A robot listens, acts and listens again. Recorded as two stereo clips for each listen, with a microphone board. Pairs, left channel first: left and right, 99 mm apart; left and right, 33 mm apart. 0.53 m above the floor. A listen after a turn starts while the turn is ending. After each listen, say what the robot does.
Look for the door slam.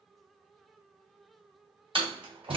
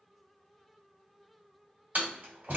Turn 60° right.
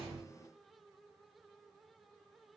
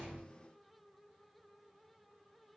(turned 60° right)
Keep listening.
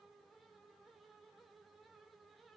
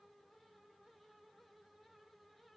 I heard a door slam, but can't make it out now. It was about straight ahead or 60° right.